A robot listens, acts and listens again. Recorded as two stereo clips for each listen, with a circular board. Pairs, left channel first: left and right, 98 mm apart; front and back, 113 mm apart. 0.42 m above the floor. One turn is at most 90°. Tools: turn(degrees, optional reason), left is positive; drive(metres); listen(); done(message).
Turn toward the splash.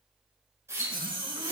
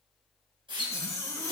turn(degrees=-90, reason="The splash: 145° right.")
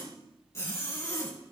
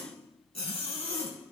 turn(degrees=-55, reason="Nothing new. It was at 55° right.")
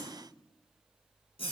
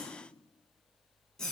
done("I heard a splash from this way, but can't make it out now.")